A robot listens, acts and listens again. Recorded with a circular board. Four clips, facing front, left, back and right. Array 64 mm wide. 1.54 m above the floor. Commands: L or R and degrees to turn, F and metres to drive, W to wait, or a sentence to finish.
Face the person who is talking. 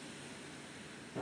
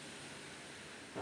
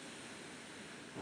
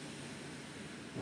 W
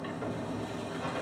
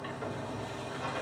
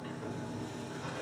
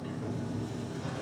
W
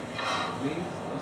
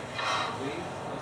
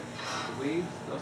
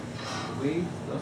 R165
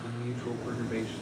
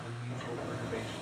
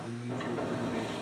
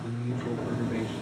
R25
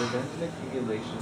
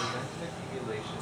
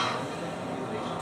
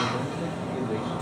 L15
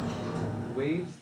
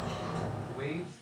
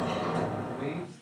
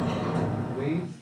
Found it: a man speaking, straight ahead.